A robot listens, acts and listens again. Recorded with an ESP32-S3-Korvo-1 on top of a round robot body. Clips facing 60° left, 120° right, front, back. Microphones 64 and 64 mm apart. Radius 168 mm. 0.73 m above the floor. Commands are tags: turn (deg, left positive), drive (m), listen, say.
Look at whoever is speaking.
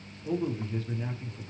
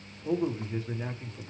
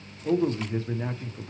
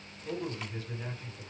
<turn deg="-50"/>
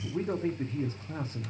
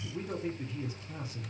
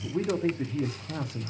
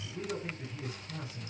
<turn deg="10"/>
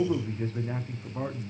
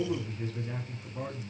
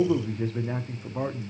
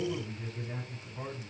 <say>Found it: a man speaking, straight ahead, 1 to 2 m away.</say>